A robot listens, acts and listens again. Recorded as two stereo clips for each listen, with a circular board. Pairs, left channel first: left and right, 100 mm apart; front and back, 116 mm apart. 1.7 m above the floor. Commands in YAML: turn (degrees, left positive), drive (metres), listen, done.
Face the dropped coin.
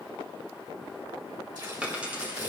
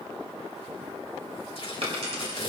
turn: -165
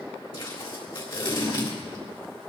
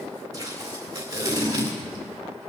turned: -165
done: "Facing where the dropped coin came from. I can't hear it now."